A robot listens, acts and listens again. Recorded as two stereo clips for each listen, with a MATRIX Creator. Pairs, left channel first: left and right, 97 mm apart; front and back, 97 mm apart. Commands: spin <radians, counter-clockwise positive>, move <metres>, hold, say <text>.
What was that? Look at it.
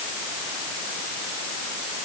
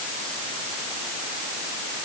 hold
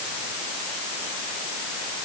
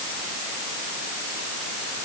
hold
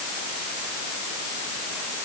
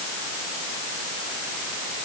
say I can't make out anything to turn to.